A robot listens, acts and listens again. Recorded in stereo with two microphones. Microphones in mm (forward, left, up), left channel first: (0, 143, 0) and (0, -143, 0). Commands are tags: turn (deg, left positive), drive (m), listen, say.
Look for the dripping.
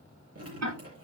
<turn deg="-55"/>
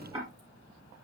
<turn deg="-70"/>
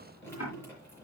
<turn deg="10"/>
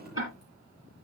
<say>Found it: dripping, straight ahead, over 4 m away.</say>